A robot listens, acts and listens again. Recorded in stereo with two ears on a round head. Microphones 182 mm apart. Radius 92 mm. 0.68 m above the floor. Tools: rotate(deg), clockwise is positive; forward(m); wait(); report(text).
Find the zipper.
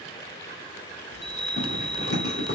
rotate(-55)
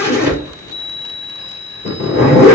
rotate(-55)
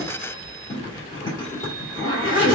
rotate(-20)
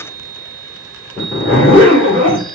report("Found it: a zipper, straight ahead.")